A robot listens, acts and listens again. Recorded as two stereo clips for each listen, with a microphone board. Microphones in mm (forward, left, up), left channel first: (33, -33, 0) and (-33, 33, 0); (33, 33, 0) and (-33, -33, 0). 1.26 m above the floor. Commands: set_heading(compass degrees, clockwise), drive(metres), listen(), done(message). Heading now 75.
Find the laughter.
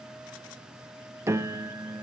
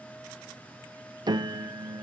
listen()
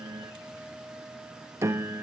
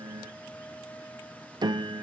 listen()
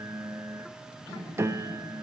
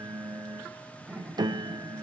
set_heading(140)
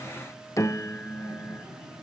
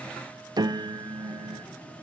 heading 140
listen()
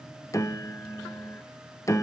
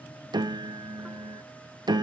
listen()
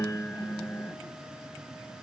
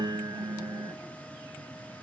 done("Facing where the laughter came from. I can't hear it now.")